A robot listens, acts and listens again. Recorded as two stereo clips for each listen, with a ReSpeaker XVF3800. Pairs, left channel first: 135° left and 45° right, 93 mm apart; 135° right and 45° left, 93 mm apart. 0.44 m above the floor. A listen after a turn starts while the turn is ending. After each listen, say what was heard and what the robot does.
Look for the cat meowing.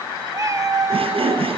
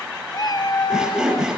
The cat meowing: 100° right. Turn 100° right.
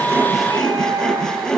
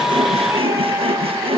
The cat meowing is now 10° right. Turn 10° right.
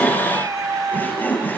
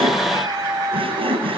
Found it: a cat meowing, straight ahead, 1 to 2 m away.